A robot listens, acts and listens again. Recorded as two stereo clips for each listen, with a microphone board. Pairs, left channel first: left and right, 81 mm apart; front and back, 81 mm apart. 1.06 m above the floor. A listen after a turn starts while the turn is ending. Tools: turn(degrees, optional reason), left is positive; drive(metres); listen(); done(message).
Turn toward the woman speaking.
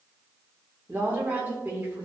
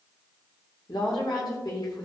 turn(degrees=-25, reason="The woman speaking: 25° right.")
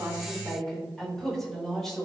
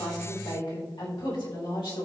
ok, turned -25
done("Found it: a woman speaking, straight ahead.")